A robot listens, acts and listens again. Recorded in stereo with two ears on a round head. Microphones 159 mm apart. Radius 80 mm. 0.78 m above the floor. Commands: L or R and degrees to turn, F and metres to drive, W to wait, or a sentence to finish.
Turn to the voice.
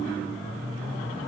W
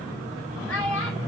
L90
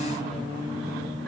W
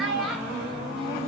Facing the child speaking.